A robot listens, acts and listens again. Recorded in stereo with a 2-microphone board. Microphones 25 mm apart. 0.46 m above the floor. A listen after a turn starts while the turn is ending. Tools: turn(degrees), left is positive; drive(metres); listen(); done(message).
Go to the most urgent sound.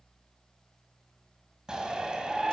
turn(degrees=-25)
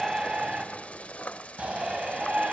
turn(degrees=-125)
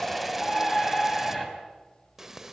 drive(metres=1.0)
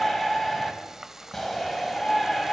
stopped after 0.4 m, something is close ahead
turn(degrees=10)
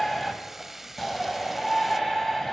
done("Something is in my way. I am facing the shout but have not reached it.")